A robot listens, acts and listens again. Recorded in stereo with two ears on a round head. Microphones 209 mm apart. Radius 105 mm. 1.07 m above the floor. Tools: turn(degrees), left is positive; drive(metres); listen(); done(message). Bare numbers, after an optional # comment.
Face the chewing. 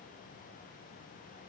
listen()
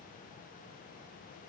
listen()
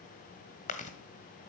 # The chewing: about 30° left or 150° left.
turn(30)
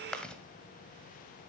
done("Facing the chewing, 1 to 2 m away.")